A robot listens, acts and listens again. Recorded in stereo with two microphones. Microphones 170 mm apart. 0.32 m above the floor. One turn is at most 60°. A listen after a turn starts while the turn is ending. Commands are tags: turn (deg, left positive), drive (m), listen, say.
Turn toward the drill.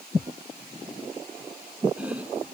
<listen/>
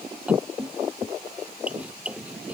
<listen/>
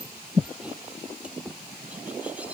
<say>I can't make out a drill, only chopping.</say>